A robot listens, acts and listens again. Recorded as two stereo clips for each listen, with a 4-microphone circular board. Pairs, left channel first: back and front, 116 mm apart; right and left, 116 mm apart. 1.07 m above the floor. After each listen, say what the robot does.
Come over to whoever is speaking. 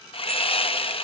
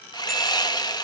Keep listening.
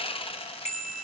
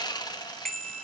Keep listening.
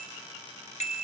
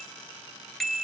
I can't make out anyone speaking, only a bicycle bell and sawing.